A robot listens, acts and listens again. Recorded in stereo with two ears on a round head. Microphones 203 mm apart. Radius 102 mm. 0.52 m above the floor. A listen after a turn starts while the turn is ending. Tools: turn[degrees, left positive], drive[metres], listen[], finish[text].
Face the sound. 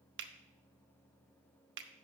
Thought: The finger snap: about 55° right or 125° right.
Action: turn[-55]
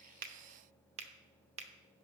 Thought: So it is at 40° right.
Action: turn[-40]
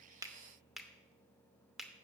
Action: finish[Found it: a finger snap, straight ahead.]